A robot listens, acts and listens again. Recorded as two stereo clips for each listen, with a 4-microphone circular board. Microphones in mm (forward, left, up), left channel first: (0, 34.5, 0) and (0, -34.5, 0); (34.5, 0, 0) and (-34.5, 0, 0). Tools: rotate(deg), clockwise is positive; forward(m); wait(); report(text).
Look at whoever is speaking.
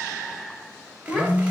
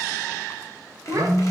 rotate(-170)
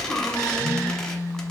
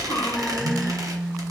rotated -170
report("Facing the child speaking, 1 to 2 m away.")